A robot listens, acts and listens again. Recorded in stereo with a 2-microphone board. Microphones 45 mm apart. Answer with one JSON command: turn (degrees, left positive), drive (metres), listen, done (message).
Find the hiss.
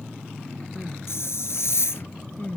{"turn": 90}
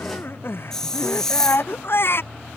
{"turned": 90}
{"turn": 10}
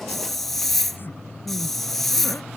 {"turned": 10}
{"done": "Facing the hiss."}